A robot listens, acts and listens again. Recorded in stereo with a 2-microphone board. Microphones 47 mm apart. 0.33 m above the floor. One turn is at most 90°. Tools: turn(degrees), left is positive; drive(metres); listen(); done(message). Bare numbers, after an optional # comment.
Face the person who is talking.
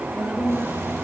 # The woman speaking: about 40° left or 140° left.
turn(40)
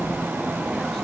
listen()
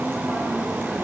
listen()
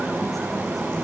done("I heard a woman speaking, but can't make it out now. It was about straight ahead or 100° left.")